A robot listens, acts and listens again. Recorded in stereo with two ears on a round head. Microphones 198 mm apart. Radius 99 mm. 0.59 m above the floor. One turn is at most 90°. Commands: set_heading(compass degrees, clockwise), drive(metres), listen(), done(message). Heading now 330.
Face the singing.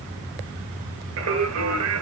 set_heading(45)
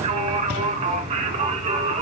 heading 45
set_heading(75)
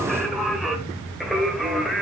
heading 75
done("Facing the singing, 1 to 2 m away.")